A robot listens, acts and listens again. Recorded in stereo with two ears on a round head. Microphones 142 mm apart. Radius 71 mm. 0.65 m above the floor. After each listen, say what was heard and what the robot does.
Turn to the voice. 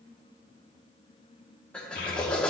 The child speaking: about 55° left or 125° left. Turn 55° left.
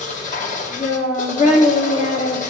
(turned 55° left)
So it is at 45° left. Turn 45° left.
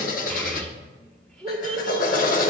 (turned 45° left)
Found it: a child speaking, straight ahead, 1 to 2 m away.